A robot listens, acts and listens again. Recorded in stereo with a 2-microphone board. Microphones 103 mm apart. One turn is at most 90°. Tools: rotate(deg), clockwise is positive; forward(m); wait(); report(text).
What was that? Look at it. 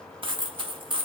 rotate(55)
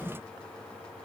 wait()
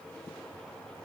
report("I heard a dropped coin, but can't make it out now. It was about straight ahead or 70° right.")